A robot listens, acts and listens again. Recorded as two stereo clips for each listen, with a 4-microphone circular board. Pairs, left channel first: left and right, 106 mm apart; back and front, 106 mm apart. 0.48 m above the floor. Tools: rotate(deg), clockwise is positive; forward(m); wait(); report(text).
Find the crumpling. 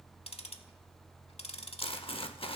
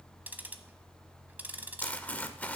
rotate(-105)
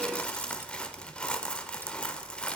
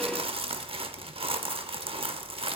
rotate(-10)
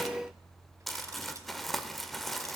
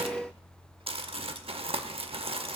report("Found it: crumpling, straight ahead, under 1 m away.")